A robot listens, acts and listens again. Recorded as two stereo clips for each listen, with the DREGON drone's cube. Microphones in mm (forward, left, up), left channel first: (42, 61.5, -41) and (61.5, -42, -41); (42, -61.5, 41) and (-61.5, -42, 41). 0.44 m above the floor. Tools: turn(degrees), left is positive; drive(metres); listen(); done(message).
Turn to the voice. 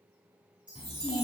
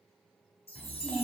turn(degrees=70)
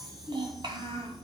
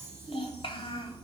turn(degrees=-45)
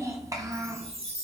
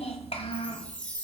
turn(degrees=-30)
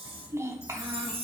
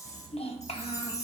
turn(degrees=-20)
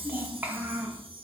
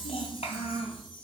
turn(degrees=-10)
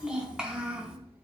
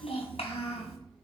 done("Facing the child speaking.")